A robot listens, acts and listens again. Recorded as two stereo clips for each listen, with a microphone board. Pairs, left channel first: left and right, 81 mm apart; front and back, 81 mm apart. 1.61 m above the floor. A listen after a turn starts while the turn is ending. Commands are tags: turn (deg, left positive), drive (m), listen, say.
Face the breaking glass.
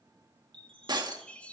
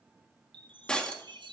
<turn deg="-80"/>
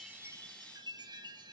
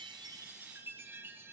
<say>Facing where the breaking glass came from. I can't hear it now.</say>